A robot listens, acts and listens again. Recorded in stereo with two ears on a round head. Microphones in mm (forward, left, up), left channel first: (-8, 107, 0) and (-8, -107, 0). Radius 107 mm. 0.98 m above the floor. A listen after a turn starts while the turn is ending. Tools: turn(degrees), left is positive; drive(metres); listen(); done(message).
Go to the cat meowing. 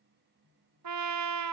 listen()
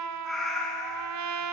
turn(degrees=30)
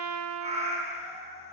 turn(degrees=-30)
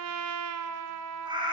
turn(degrees=-20)
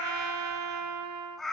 drive(metres=1.0)
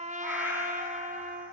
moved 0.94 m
drive(metres=1.0)
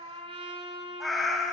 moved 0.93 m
drive(metres=1.0)
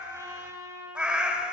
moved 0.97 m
drive(metres=1.0)
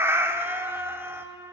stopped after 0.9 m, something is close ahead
turn(degrees=-10)
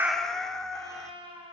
done("Arrived at the cat meowing, straight ahead.")